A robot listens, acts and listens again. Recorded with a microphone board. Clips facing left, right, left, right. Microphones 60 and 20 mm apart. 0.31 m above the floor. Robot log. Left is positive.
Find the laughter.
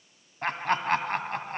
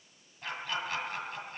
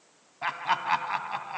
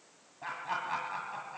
note: The laughter: about 60° left or 120° left.
cmd yaw +60
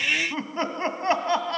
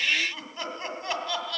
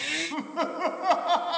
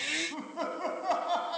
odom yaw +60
note: So it is at 45° left.
cmd yaw +45
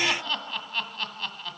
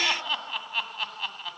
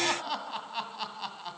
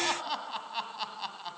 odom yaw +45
end: Facing the laughter, 1 to 2 m away.